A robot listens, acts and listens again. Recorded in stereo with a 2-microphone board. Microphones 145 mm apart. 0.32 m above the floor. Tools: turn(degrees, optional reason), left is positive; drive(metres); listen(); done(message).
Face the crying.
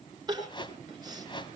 turn(degrees=-30, reason="The crying: about 30° right or 150° right.")
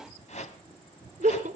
turn(degrees=-115, reason="So it is at 115° right.")
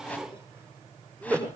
turn(degrees=-20, reason="The crying is now 20° right.")
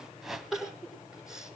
done("Found it: crying, straight ahead, over 4 m away.")